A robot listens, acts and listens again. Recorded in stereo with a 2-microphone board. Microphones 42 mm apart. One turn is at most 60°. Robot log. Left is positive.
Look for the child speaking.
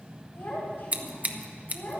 note: The child speaking: about 50° left or 130° left.
cmd yaw +50
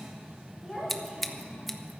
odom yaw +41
end: Found it: a child speaking, straight ahead, over 4 m away.